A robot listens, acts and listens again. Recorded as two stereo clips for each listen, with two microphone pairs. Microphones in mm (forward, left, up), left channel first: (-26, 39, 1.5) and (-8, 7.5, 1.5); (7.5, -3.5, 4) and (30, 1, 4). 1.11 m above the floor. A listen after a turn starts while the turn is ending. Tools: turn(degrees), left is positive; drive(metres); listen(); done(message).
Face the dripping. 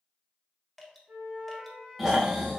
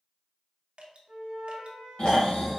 turn(degrees=35)
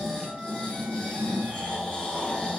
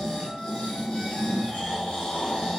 listen()
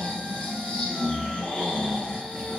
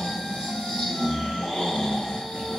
listen()
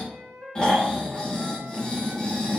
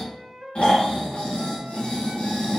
done("Facing where the dripping came from. I can't hear it now.")